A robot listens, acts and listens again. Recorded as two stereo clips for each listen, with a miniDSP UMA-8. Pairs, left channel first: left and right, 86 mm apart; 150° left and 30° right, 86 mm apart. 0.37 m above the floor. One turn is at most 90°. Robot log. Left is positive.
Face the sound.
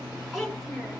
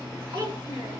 end: Found it: a child speaking, straight ahead, 2 to 4 m away.